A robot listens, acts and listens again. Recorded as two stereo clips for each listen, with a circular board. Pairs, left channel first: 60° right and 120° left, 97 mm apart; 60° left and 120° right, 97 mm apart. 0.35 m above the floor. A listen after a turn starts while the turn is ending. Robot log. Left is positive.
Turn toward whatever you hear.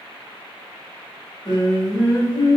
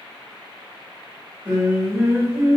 note: The singing: 65° right.
cmd yaw -65
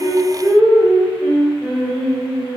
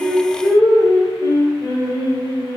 note: The singing is now 40° left.
cmd yaw +40
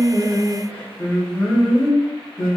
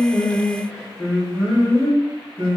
note: The singing is now 25° left.
cmd yaw +25
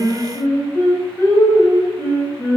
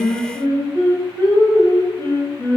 end: Facing the singing.